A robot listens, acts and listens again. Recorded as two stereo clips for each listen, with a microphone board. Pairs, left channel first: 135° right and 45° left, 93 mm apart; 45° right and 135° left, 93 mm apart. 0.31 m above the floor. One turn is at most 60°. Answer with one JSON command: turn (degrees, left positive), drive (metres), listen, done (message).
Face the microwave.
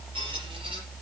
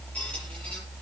{"listen": true}
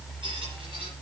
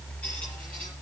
{"listen": true}
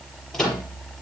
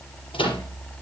{"turn": -45}
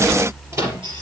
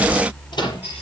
{"turn": -10}
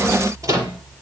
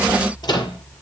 {"done": "Facing the microwave, over 4 m away."}